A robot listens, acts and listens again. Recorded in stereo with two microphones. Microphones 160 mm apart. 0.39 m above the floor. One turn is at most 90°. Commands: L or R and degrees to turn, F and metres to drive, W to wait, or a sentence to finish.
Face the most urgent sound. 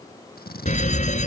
L50
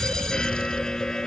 Facing the fire alarm.